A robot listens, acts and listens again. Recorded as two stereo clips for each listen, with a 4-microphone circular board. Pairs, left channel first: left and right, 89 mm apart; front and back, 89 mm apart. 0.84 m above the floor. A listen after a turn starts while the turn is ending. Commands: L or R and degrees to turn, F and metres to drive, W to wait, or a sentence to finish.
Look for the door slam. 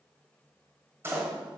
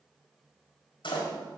R25
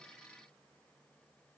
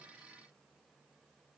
Facing where the door slam came from. I can't hear it now.